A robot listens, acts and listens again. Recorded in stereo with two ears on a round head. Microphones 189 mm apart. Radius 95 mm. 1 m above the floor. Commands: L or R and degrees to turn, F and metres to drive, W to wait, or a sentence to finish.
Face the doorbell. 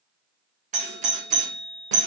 R35
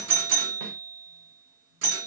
R100
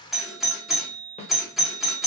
Found it: a doorbell, straight ahead, 1 to 2 m away.